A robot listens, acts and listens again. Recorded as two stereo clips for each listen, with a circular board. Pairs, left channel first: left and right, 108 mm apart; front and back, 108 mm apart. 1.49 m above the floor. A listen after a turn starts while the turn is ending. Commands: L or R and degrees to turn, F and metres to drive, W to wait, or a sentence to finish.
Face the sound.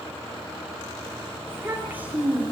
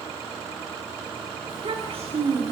R170
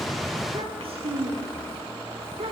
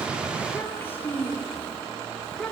R85
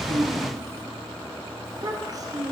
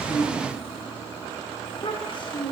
R40
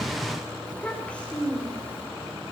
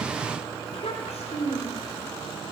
L10
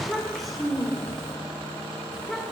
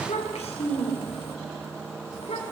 Facing the child speaking.